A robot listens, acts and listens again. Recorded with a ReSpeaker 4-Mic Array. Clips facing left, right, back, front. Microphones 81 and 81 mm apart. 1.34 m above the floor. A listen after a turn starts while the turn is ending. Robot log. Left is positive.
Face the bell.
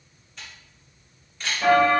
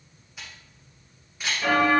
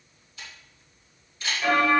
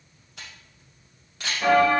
note: The bell: 50° left.
cmd yaw +50
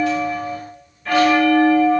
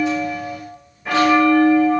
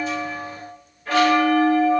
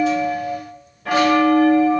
note: The bell is now 15° right.
cmd yaw -15
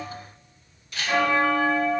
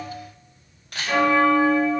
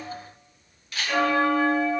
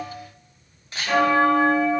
end: Found it: a bell, straight ahead.